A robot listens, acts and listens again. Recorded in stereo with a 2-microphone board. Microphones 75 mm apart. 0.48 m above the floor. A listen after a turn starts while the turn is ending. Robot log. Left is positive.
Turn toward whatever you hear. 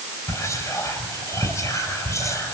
note: The whispering: about 45° left or 135° left.
cmd yaw +45
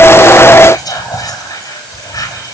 note: So it is at 80° left.
cmd yaw +80
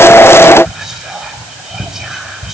note: The whispering is now 10° right.
cmd yaw -10
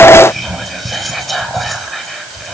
end: Facing the whispering.